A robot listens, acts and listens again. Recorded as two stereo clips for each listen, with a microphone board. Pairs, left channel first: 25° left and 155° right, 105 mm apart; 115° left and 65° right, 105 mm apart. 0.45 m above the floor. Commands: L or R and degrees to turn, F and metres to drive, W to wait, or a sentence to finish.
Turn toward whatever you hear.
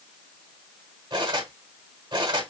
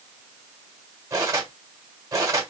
R120
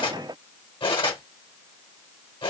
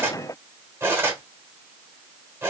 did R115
Facing the cutlery clinking, 1 to 2 m away.